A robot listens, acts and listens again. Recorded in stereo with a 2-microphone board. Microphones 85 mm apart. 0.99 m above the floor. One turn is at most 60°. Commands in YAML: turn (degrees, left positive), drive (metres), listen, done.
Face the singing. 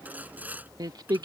turn: -55
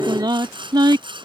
turn: -60
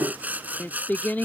turn: 20
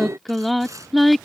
done: "Found it: singing, straight ahead."